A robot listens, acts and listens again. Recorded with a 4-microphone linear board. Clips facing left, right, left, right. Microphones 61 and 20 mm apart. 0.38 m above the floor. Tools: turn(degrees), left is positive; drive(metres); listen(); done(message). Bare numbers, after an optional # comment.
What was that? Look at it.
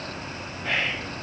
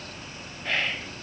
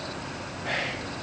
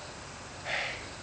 turn(30)
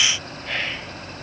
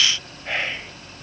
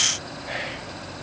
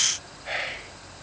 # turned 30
# So it is at 20° right.
turn(-20)
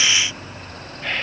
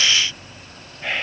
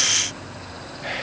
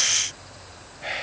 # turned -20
# The whispering is now 10° right.
turn(-10)
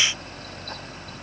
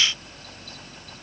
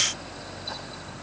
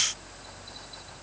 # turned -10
listen()
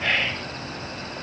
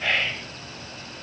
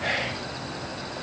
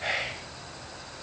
done("Facing the whispering.")